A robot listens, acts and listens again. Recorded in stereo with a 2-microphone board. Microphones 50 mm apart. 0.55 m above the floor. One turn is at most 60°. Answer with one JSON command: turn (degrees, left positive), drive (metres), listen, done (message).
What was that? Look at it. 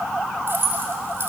{"turn": -45}
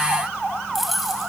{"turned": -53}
{"done": "Found it: keys jangling, straight ahead, 2 to 4 m away."}